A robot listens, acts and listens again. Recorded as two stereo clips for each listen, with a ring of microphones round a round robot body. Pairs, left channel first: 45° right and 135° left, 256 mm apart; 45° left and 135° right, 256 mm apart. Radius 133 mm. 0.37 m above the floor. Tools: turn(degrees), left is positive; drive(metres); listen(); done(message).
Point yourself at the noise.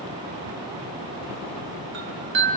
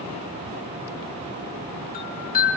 turn(degrees=100)
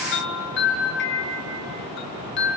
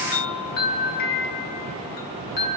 done("Facing the chime.")